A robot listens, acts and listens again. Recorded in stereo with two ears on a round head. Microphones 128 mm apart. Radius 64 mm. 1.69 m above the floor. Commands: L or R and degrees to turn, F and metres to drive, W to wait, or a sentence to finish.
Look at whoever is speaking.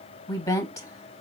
L25
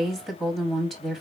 Found it: a woman speaking, straight ahead.